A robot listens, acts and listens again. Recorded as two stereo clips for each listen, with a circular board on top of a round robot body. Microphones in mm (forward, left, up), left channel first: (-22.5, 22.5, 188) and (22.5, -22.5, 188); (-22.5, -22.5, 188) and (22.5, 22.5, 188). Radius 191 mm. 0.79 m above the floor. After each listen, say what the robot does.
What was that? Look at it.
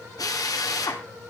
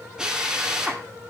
Turn 125° left.
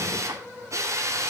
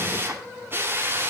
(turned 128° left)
Facing the drill, 2 to 4 m away.